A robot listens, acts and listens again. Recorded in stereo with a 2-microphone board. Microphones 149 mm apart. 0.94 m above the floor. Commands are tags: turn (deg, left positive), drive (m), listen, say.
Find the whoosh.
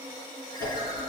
<turn deg="-30"/>
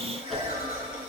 <say>Found it: a whoosh, straight ahead, 2 to 4 m away.</say>